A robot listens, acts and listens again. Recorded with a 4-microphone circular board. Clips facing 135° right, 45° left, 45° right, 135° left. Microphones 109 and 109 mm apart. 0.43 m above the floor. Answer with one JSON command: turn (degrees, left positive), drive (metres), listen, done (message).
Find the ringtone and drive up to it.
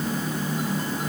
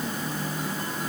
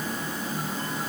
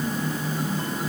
{"listen": true}
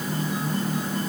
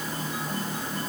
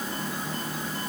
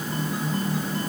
{"listen": true}
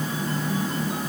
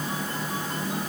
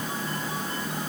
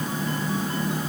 {"done": "I can't make out a ringtone to turn to."}